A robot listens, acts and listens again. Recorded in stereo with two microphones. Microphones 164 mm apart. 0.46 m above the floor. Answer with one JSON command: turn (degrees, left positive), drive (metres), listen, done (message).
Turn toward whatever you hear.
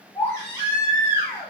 {"turn": 20}
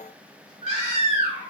{"turn": 145}
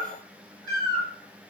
{"turn": 25}
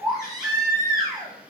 {"done": "Found it: a baby crying, straight ahead."}